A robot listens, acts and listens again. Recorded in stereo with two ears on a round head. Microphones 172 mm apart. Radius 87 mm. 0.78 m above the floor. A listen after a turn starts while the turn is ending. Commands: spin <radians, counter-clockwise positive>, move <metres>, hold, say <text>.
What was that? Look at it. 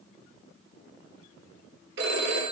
spin -1.13
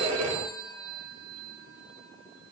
spin -0.87
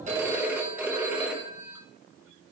spin -0.17
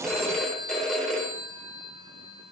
say Facing the phone ringing.